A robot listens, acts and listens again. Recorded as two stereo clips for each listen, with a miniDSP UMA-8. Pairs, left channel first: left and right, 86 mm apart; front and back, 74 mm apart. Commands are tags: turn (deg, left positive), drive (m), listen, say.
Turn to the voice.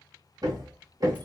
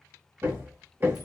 <listen/>
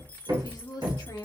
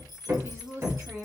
<turn deg="130"/>
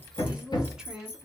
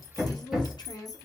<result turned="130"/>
<turn deg="-10"/>
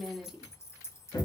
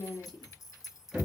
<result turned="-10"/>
<say>Found it: a woman speaking, straight ahead.</say>